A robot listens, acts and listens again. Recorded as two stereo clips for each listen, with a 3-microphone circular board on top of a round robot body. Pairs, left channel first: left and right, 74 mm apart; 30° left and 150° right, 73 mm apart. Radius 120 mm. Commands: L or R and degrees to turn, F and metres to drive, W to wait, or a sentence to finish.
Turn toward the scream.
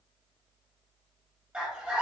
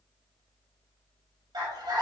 R165
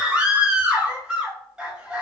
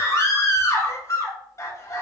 R15
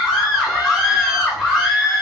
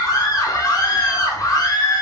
Facing the scream, 1 to 2 m away.